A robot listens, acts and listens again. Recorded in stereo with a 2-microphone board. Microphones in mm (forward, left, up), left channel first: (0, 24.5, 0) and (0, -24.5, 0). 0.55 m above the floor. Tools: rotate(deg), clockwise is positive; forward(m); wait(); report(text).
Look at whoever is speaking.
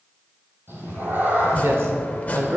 rotate(60)
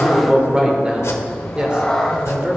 rotate(25)
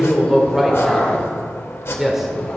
rotate(10)
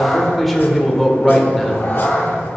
report("Found it: a man speaking, straight ahead.")